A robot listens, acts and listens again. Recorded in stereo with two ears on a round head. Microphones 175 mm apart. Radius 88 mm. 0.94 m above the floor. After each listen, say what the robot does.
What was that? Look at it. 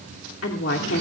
Turn 70° left.
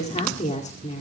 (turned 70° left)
Turn 35° left.
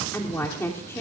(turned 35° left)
Turn 15° left.
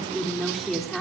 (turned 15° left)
Found it: a woman speaking, straight ahead.